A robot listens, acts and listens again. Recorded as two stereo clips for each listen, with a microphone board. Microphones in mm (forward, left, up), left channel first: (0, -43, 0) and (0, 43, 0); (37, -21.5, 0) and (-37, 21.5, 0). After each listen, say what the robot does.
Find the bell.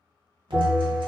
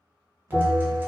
Turn 25° left.
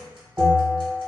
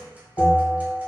Turn 15° left.
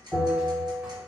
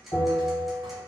Facing the bell.